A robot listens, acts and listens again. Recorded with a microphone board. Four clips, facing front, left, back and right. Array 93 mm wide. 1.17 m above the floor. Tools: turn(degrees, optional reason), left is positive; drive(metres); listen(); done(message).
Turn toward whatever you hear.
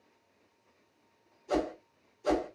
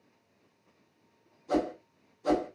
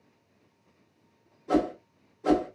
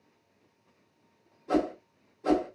turn(degrees=-145, reason="The whoosh: 145° right.")
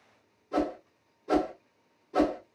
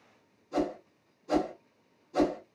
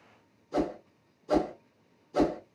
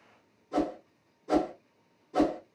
turn(degrees=-20, reason="The whoosh is now 20° right.")
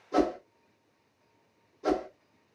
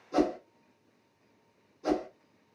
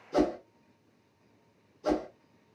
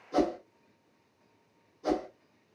done("Facing the whoosh, 1 to 2 m away.")